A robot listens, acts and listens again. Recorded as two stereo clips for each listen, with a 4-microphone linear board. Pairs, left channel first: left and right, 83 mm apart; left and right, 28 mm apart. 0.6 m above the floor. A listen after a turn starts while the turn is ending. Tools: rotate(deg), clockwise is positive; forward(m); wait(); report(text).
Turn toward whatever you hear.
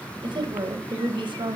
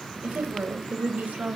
rotate(90)
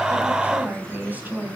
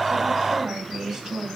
rotate(20)
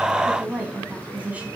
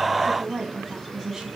rotate(15)
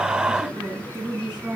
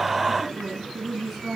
rotate(10)
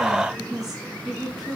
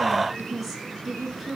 report("Facing the woman speaking.")